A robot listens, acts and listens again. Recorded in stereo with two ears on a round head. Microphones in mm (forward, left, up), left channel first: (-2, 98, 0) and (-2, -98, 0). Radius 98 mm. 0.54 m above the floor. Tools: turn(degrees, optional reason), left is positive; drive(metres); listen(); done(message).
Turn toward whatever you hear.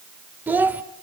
turn(degrees=-30)
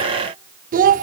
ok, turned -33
turn(degrees=-140, reason="So it is at 140° right.")
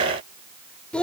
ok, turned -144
done("Facing the child speaking.")